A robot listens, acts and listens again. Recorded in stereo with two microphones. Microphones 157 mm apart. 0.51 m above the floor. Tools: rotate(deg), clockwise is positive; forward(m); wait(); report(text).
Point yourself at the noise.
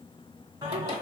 rotate(25)
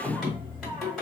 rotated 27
report("Facing the singing, 1 to 2 m away.")